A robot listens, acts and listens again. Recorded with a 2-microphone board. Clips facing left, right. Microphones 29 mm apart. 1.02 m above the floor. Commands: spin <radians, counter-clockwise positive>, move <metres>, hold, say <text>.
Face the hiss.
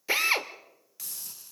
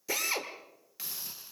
spin -0.44
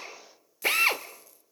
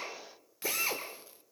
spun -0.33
hold
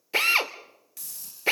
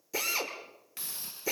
spin -2.44
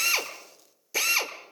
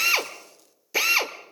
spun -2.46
hold
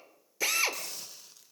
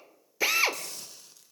spin 0.17
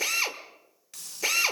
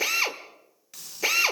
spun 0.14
say Found it: a hiss, straight ahead.